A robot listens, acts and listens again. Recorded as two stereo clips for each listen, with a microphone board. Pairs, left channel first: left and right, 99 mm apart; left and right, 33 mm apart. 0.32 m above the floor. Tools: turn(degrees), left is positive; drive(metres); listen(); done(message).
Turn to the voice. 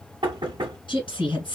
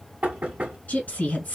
turn(degrees=50)
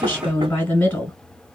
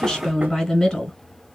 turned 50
turn(degrees=15)
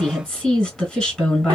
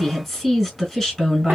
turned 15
done("Found it: a woman speaking, straight ahead, 1 to 2 m away.")